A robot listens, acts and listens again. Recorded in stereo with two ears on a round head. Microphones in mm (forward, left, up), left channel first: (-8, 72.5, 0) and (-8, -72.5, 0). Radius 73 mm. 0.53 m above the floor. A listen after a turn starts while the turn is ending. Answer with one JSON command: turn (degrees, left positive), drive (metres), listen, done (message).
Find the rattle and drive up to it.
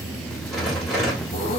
{"turn": 30}
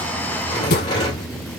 {"turn": 150}
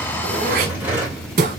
{"turn": -15}
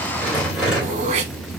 {"drive": 1.0}
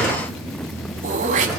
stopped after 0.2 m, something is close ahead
{"done": "Something is in my way. I am facing the rattle but have not reached it."}